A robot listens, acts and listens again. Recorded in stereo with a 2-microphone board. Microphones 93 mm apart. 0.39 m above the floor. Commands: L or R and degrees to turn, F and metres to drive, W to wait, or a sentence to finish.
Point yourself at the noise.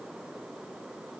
W
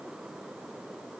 W
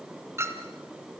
R25
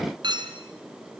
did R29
R125
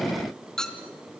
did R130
Facing the clink.